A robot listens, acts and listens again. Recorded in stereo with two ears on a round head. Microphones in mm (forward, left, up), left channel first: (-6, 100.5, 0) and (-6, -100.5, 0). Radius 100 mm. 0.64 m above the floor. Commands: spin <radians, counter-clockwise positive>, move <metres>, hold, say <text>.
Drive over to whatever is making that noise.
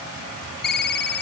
spin 0.87
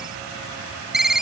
move 1.0
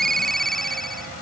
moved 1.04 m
move 1.0
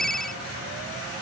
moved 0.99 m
move 1.0
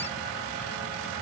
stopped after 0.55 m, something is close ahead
hold
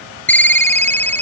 spin 0.17
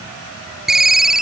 say I am next to the ringtone.